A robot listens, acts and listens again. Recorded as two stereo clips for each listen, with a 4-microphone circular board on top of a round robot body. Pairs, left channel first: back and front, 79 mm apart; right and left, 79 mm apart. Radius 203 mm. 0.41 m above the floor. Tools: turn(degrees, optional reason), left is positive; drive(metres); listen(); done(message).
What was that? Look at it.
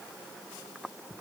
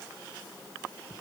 listen()
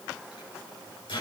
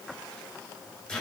turn(degrees=-170, reason="The microwave: 170° right.")
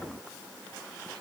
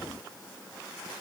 listen()
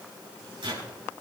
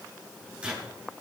turn(degrees=10, reason="The microwave is now 10° left.")
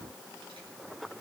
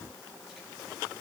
listen()
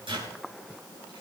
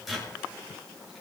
done("Found it: a microwave, straight ahead, over 4 m away.")